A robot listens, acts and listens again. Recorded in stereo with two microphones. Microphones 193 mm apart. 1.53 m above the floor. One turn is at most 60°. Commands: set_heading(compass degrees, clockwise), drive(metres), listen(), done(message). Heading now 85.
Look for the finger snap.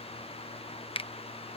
set_heading(55)
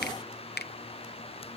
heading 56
set_heading(356)
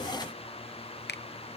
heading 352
set_heading(292)
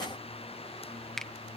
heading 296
done("Found it: a finger snap, straight ahead.")